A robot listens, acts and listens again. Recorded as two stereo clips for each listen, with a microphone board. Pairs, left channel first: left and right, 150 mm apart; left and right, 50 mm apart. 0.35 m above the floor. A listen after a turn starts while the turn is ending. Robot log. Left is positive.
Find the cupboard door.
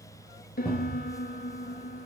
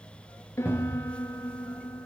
note: The cupboard door: about 30° right or 150° right.
cmd yaw -30
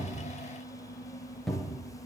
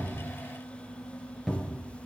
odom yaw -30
end: Facing the cupboard door.